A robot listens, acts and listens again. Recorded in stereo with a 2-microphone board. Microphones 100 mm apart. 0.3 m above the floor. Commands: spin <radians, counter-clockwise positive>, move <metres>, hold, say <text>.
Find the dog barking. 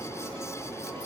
hold
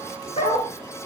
spin 1.57
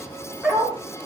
say Found it: a dog barking, straight ahead, over 4 m away.